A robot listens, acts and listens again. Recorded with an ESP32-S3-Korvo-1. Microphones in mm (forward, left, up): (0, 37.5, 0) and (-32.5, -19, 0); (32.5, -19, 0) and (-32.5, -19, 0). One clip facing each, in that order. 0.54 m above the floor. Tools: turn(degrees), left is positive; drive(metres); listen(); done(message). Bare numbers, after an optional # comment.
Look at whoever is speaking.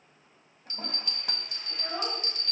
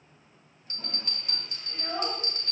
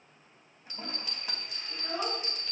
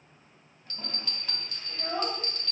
# The child speaking: 170° left.
turn(170)
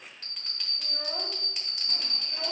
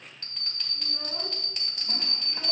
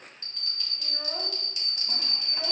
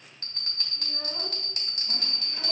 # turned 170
listen()
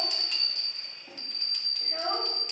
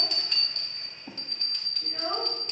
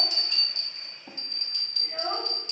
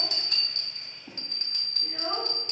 # The child speaking is now 35° left.
turn(35)
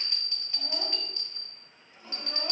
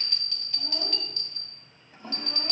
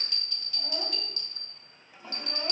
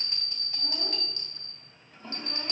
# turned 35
listen()
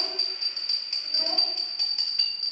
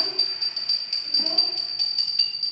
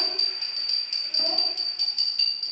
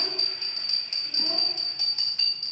listen()
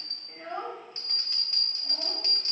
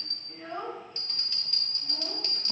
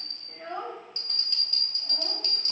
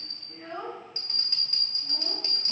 # The child speaking is now 15° left.
turn(15)
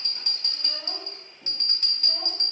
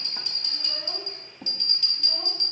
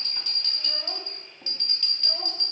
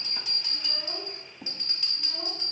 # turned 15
listen()
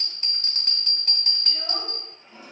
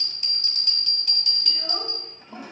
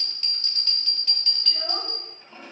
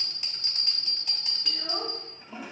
listen()
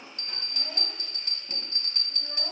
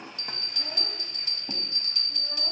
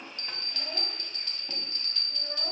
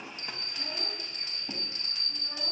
done("I heard a child speaking from this way, but can't make it out now.")